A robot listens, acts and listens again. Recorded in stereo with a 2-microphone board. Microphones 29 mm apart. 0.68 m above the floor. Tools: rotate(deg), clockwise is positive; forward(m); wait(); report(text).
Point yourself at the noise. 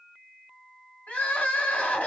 rotate(-70)
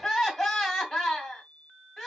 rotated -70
report("Facing the crying, 1 to 2 m away.")